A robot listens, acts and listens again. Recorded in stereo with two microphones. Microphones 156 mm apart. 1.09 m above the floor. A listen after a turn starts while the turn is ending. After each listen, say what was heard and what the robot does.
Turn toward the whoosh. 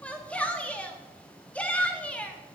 Keep listening.
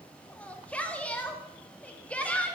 Keep listening.
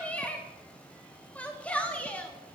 I can't make out a whoosh to turn to.